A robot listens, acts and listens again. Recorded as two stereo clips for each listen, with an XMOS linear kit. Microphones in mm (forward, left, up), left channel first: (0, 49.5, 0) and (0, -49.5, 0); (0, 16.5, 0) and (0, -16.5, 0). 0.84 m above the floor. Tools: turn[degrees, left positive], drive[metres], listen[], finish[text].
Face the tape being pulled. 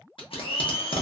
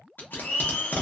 Thought: The tape being pulled: about 65° left or 115° left.
Action: turn[65]
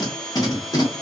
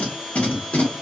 Thought: So it is at 40° left.
Action: turn[40]
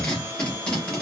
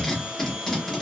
Thought: The tape being pulled is now 10° left.
Action: turn[10]
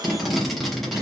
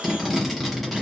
Action: finish[Facing the tape being pulled.]